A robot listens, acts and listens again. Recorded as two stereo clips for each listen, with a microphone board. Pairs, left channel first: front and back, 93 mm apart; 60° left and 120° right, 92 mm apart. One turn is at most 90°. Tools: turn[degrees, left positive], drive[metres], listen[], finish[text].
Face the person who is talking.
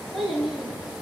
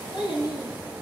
Thought: The child speaking: 90° left.
Action: turn[90]
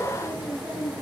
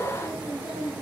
Action: finish[Found it: a child speaking, straight ahead, over 4 m away.]